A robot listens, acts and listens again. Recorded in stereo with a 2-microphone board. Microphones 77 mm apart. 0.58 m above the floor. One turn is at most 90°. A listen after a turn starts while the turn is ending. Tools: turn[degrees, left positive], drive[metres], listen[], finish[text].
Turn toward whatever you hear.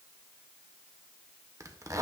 Thought: The zipper: about 45° right or 135° right.
Action: turn[-45]
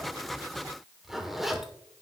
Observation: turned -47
Action: finish[Facing the zipper, 1 to 2 m away.]